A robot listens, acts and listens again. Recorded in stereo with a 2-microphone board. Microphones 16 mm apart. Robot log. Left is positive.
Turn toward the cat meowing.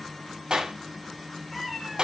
note: The cat meowing: about 15° left or 165° left.
cmd yaw +15
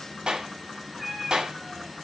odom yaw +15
end: Facing the cat meowing, 2 to 4 m away.